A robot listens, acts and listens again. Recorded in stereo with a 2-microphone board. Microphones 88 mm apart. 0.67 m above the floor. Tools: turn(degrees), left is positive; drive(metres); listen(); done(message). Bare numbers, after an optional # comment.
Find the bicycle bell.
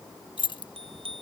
turn(-90)
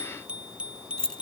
# So it is at 15° right.
turn(-15)
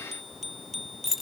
done("Facing the bicycle bell.")